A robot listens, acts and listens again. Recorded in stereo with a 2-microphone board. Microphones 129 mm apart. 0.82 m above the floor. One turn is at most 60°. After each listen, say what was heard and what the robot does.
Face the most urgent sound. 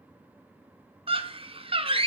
The scream: about 45° right or 135° right. Turn 45° right.
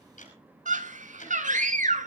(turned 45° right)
So it is at 90° right. Turn 60° right.
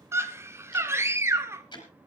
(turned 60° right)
The scream is now 20° right. Turn 20° right.
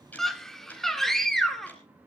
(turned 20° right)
Facing the scream.